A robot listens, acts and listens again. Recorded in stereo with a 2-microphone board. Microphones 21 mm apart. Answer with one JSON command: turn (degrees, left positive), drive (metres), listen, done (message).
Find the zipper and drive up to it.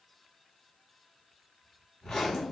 {"turn": 30}
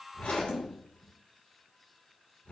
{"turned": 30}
{"turn": 135}
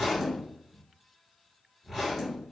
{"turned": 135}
{"turn": 10}
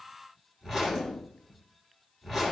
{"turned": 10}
{"drive": 1.0}
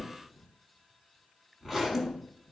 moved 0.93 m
{"drive": 1.0}
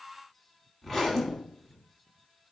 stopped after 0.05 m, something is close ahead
{"done": "Arrived at the zipper, straight ahead."}